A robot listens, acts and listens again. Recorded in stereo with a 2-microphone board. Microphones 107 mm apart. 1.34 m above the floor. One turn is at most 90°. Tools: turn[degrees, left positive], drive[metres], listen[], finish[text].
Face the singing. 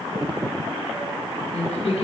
Action: turn[90]
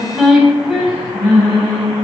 Thought: So it is at 10° right.
Action: turn[-10]
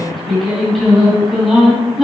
Action: finish[Found it: singing, straight ahead.]